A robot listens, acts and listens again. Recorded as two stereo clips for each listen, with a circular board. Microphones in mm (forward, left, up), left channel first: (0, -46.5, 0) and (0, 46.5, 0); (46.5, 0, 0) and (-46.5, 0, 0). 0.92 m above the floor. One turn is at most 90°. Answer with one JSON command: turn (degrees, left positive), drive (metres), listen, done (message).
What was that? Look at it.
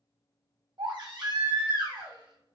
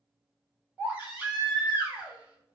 {"turn": 90}
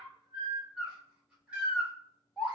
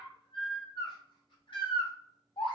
{"turn": 15}
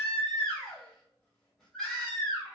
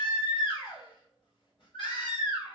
{"done": "Facing the baby crying."}